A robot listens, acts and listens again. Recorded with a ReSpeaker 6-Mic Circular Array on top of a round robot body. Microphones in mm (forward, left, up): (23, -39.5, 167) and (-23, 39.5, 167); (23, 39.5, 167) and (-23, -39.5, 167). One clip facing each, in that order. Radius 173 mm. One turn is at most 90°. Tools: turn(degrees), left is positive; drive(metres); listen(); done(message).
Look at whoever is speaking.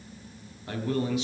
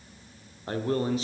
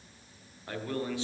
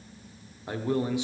turn(degrees=90)
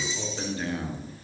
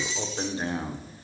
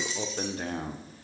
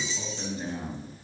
turn(degrees=60)
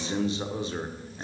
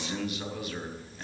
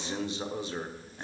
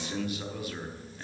done("Found it: a man speaking, straight ahead, 1 to 2 m away.")